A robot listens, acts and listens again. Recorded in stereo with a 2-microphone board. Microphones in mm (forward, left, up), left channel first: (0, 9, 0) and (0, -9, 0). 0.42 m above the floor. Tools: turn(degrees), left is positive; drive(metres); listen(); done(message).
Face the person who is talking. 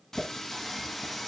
listen()
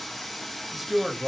turn(degrees=-30)
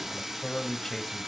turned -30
turn(degrees=15)
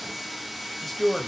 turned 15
done("Facing the man speaking.")